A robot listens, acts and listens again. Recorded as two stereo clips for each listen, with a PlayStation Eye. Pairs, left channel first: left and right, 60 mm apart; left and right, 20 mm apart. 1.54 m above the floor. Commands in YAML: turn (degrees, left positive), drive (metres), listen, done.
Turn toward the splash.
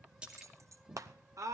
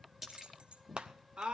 turn: -30
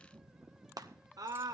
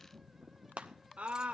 listen: true
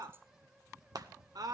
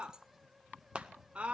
done: "I heard a splash, but can't make it out now. It was about 15° left or 135° right."